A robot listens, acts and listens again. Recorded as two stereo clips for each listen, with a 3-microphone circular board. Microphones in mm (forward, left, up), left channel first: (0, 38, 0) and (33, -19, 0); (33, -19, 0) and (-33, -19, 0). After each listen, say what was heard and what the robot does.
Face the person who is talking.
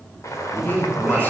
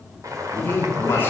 The man speaking: 60° left. Turn 60° left.
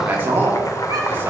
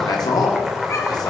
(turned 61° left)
Facing the man speaking, 2 to 4 m away.